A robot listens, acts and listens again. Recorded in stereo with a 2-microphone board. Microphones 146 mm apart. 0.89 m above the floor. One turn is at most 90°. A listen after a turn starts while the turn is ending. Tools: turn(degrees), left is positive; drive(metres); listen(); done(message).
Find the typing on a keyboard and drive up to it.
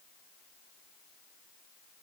listen()
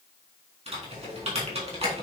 turn(degrees=-45)
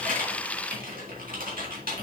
turn(degrees=-90)
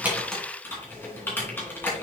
turn(degrees=15)
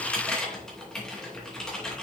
drive(metres=1.0)
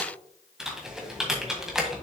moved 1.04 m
drive(metres=1.0)
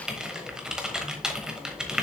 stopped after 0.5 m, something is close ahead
done("Arrived at the typing on a keyboard, straight ahead.")